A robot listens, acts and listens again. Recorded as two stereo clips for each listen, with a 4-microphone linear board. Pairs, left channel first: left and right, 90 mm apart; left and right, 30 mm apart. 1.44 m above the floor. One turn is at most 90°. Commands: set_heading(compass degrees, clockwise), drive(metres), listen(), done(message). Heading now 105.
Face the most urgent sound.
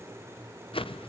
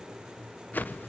listen()
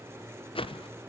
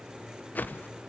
listen()
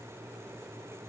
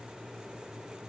done("I can't make out anything urgent to turn to.")